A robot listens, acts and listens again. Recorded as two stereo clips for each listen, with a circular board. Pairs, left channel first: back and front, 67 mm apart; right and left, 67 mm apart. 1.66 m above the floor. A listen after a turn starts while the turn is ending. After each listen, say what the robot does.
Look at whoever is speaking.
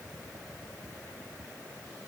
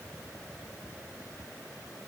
Keep listening.
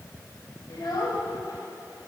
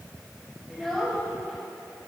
Turn 175° right.
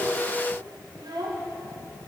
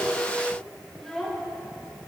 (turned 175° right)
Found it: a child speaking, straight ahead.